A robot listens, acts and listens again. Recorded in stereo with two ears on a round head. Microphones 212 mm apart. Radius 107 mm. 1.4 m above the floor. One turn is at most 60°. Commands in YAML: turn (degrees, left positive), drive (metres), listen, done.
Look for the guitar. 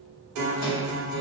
turn: -60
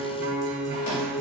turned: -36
turn: -45
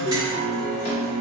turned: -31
turn: -15
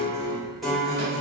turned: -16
done: "Found it: a guitar, straight ahead."